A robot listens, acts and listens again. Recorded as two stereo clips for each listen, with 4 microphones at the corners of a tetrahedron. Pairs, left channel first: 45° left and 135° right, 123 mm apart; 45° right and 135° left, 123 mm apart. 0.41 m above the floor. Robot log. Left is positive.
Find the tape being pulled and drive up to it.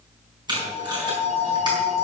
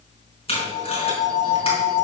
note: The tape being pulled: 80° right.
cmd yaw -80
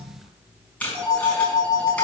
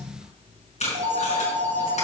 note: The tape being pulled is now 30° right.
cmd yaw -30
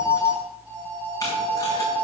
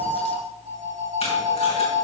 cmd idle
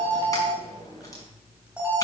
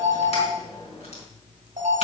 cmd idle
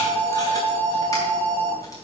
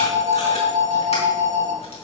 end: Facing where the tape being pulled came from. I can't hear it now. I did not reach it.